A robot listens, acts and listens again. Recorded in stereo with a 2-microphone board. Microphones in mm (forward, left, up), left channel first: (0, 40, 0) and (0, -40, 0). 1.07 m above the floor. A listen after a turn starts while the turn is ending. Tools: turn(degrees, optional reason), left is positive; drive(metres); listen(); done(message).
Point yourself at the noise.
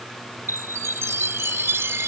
turn(degrees=-30, reason="The chime: about 30° right or 150° right.")
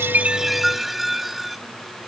done("Facing the chime.")